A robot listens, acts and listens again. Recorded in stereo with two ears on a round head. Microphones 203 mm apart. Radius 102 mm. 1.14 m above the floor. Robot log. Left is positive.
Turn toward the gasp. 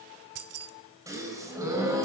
cmd yaw -30
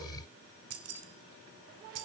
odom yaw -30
cmd idle
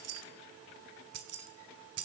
end: I heard a gasp, but can't make it out now. It was about 15° left or 135° right.